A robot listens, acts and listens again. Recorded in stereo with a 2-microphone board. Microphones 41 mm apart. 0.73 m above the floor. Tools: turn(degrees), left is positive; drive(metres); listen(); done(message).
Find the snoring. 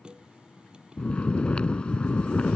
turn(degrees=25)
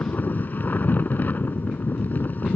turn(degrees=125)
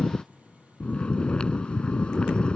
turn(degrees=25)
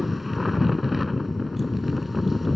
done("Facing the snoring.")